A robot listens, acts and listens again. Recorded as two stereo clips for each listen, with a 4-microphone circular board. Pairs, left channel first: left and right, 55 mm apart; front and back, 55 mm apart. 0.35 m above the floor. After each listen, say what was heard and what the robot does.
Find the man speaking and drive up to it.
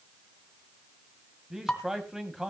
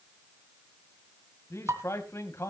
The man speaking: 10° right. Turn 10° right.
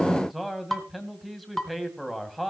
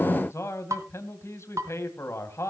Drive 1.0 m forward.
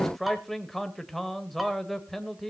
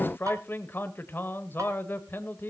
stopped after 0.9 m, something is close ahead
Arrived at the man speaking, straight ahead.